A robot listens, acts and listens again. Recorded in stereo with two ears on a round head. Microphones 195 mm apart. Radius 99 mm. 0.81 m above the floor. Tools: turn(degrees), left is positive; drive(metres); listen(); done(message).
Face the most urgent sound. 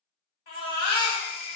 turn(degrees=45)
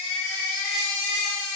done("Found it: a baby crying, straight ahead, 1 to 2 m away.")